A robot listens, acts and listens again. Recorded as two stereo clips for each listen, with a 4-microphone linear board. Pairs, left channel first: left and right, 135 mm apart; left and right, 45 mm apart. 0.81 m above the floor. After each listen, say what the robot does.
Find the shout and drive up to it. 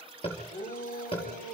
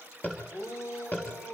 Turn 90° left.
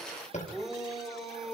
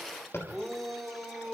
Drive 1.0 m forward.
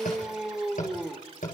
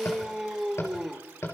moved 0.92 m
Drive 1.0 m forward.
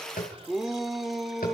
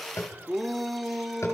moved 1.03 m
Drive 1.0 m forward.
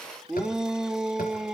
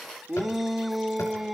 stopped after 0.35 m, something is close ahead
Arrived at the shout, straight ahead.